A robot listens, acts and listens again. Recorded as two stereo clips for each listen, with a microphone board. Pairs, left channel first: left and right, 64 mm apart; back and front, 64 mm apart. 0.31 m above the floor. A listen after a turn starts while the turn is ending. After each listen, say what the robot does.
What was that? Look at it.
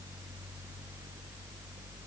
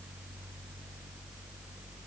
Keep listening.
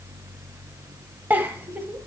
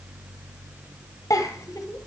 Turn 145° right.
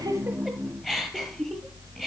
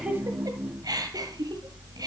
Found it: a giggle, straight ahead, 1 to 2 m away.